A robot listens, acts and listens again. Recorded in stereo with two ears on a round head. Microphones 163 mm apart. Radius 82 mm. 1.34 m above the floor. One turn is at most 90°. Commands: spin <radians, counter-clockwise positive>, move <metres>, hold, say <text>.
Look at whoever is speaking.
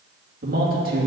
spin -0.96
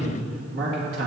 spin -1.22
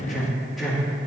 say Facing the man speaking.